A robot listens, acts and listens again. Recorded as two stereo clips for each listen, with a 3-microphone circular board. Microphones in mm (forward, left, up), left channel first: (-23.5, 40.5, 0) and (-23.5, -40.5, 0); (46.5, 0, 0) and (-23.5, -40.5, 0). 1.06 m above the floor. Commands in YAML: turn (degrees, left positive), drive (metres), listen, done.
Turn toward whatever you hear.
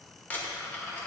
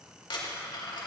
turn: 20
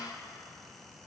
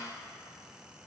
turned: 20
done: "I heard a dropped coin from this way, but can't make it out now."